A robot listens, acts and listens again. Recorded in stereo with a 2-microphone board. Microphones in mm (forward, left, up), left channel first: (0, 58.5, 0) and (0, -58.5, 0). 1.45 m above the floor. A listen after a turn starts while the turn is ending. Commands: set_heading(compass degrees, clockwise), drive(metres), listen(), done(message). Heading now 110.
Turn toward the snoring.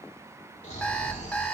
set_heading(20)
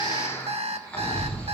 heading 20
set_heading(10)
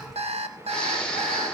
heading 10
done("Found it: snoring, straight ahead, 2 to 4 m away.")